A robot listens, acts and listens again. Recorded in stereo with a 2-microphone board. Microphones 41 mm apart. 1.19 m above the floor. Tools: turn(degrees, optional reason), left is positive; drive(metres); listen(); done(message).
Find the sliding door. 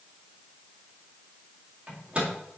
listen()
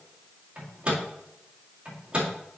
listen()
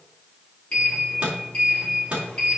turn(degrees=25, reason="The sliding door: about 25° left or 155° left.")
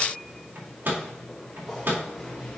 done("Facing the sliding door, 2 to 4 m away.")